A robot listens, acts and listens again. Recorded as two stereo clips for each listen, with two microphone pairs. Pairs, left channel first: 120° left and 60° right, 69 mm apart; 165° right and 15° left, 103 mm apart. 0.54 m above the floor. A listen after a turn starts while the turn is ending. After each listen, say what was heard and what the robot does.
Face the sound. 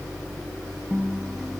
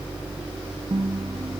The guitar: 25° left. Turn 25° left.
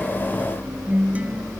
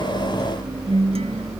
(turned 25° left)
Facing the guitar.